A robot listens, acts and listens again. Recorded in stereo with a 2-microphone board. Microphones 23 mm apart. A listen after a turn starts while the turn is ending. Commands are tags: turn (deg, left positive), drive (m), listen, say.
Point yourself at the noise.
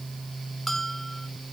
<turn deg="30"/>
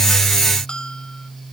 <turn deg="140"/>
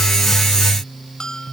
<turn deg="35"/>
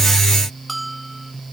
<say>Facing the bell.</say>